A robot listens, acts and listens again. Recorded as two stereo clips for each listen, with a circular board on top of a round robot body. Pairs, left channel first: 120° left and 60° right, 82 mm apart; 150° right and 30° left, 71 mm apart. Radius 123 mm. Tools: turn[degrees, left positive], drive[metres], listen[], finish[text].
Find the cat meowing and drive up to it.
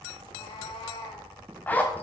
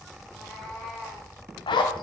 Thought: The cat meowing: 135° left.
Action: turn[135]
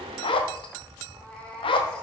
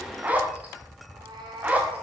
Thought: The cat meowing is now 45° left.
Action: turn[45]
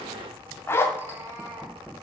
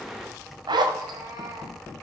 Action: drive[1.0]
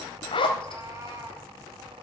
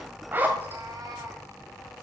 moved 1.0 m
Action: drive[1.0]
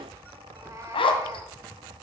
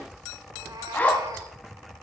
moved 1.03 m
Action: listen[]
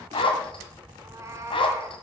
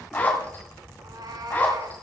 Action: drive[1.0]
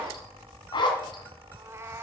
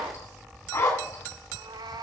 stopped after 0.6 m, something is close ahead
Action: finish[I am next to the cat meowing.]